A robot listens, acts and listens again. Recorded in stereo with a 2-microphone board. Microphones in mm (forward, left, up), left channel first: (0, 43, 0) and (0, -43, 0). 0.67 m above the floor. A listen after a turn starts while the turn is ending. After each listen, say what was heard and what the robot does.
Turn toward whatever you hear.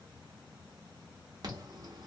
The alarm: about 50° right or 130° right. Turn 50° right.
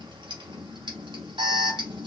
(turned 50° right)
So it is at 75° right. Turn 75° right.
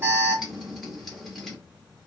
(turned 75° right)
Found it: an alarm, straight ahead, 1 to 2 m away.